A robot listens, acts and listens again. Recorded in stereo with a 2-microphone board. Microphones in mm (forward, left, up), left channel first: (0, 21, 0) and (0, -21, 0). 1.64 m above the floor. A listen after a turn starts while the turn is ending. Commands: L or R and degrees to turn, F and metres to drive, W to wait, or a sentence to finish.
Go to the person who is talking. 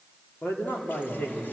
L50
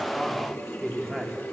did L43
F1.0
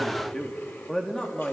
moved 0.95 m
L15
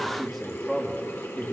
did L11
F1.0
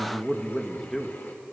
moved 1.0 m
F1.0
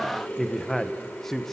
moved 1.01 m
F1.0
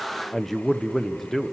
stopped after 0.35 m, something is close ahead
I am next to the man speaking.